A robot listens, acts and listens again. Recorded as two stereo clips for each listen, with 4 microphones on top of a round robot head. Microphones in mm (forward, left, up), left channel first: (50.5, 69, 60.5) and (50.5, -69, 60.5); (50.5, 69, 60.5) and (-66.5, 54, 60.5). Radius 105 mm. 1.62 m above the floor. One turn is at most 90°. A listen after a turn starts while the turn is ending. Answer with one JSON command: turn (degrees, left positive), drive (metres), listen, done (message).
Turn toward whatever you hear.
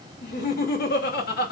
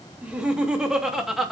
{"turn": 90}
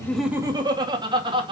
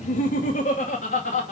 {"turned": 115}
{"turn": -35}
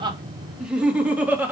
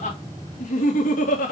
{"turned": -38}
{"turn": -10}
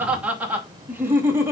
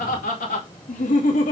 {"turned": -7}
{"turn": -15}
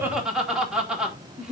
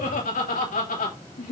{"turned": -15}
{"done": "Facing the laughter."}